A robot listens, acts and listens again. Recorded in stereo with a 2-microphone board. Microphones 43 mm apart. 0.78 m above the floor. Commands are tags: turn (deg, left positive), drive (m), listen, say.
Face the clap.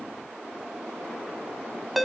<listen/>
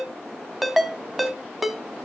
<listen/>
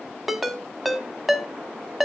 <say>I can't make out a clap, only a ringtone.</say>